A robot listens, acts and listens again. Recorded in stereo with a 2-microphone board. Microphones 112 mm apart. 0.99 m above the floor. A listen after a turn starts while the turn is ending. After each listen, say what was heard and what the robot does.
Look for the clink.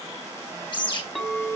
Turn 30° left.
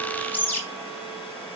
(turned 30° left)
Keep listening.
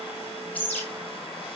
Keep listening.
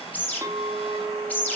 So it is at 25° right. Turn 25° right.
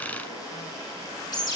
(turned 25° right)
Keep listening.
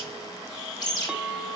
Facing the clink, 1 to 2 m away.